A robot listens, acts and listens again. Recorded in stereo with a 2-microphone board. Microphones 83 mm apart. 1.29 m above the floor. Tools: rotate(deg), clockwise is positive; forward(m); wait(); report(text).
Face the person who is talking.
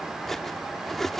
wait()
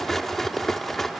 wait()
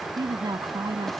rotate(60)
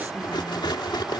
wait()
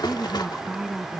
report("Found it: a woman speaking, straight ahead.")